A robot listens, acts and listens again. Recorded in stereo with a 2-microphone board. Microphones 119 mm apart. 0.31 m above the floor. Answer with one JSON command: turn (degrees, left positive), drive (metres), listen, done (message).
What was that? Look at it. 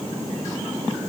{"listen": true}
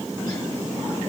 {"listen": true}
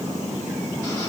{"done": "I can't make out anything."}